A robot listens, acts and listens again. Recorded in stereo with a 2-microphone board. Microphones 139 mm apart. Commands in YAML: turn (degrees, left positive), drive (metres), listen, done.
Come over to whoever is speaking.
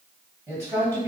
turn: -20
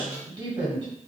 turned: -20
turn: -140
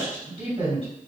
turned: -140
turn: -55
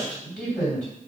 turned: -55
drive: 1.0
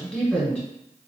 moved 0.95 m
turn: 10
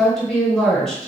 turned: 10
drive: 1.0
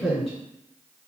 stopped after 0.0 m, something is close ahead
done: "I am next to the woman speaking."